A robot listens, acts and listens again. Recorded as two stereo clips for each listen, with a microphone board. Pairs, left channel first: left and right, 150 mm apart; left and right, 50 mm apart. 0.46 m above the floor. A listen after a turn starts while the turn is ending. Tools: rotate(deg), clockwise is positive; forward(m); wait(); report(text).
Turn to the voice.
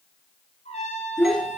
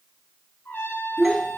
rotate(-30)
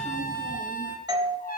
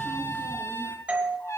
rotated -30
wait()
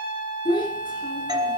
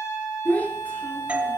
rotate(-150)
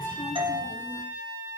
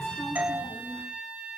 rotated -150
wait()
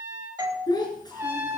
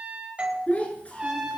rotate(-30)
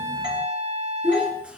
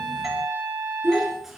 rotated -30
report("Facing the child speaking, over 4 m away.")